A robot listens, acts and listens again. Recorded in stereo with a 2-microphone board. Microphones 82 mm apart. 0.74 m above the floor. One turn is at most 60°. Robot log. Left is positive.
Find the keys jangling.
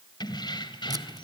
note: The keys jangling: about 65° left or 115° left.
cmd yaw +60
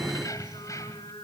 note: So it is at 40° left.
cmd yaw +40
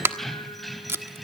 end: Found it: keys jangling, straight ahead, 2 to 4 m away.